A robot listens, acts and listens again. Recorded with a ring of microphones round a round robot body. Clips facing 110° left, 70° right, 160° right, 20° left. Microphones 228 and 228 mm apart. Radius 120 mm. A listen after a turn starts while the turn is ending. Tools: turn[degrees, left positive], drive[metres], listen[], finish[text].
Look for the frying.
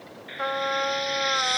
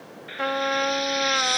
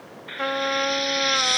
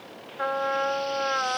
Thought: The frying: 150° right.
Action: turn[-150]
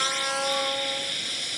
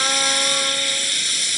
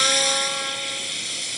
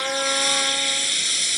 Thought: The frying is now 45° right.
Action: turn[-45]
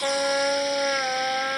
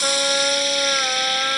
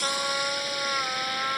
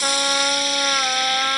Thought: The frying is now 25° right.
Action: turn[-25]
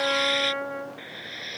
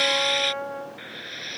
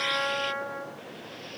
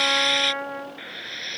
Thought: The frying is now 10° left.
Action: turn[10]
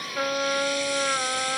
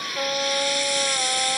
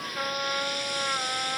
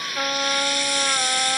Action: finish[Found it: frying, straight ahead.]